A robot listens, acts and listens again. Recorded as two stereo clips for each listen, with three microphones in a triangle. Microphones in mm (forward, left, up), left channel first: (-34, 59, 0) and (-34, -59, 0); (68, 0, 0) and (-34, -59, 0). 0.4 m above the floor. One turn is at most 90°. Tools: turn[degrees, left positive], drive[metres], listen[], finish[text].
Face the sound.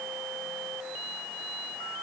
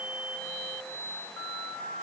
Action: listen[]
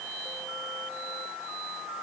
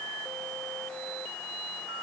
Action: listen[]
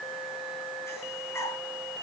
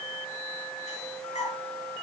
Thought: The breathing: 25° left.
Action: turn[25]
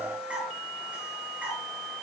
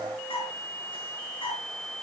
Thought: The breathing is now 10° right.
Action: turn[-10]
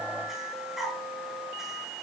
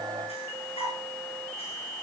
Action: finish[Facing the breathing, over 4 m away.]